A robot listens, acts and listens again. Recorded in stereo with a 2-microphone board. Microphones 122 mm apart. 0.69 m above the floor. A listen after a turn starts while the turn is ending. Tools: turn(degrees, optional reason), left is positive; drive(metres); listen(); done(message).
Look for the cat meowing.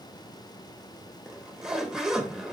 listen()
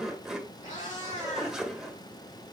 turn(degrees=90)
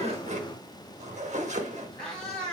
done("Facing the cat meowing.")